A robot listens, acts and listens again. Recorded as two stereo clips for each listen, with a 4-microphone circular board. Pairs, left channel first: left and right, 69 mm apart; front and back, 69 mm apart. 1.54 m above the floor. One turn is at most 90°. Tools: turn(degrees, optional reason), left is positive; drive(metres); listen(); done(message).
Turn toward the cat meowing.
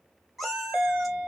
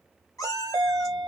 done("Facing the cat meowing.")